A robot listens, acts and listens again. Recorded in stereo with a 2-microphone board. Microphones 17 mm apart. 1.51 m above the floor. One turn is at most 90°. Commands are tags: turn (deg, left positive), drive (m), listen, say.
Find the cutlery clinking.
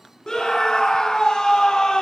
<listen/>
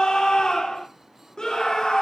<listen/>
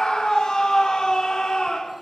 <say>I can't make out cutlery clinking, only a scream.</say>